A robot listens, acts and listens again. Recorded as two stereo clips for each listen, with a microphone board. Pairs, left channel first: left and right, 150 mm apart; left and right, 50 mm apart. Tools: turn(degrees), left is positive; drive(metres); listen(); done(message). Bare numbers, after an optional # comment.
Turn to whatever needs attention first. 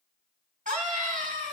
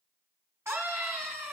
# The scream: about 60° right or 120° right.
turn(-60)
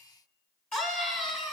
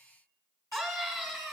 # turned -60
done("Facing the scream.")